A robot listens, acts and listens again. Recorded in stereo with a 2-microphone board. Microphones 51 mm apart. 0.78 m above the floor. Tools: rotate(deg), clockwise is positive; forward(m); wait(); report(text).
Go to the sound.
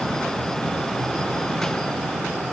wait()
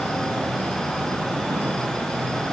wait()
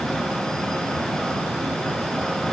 report("I can't make out anything.")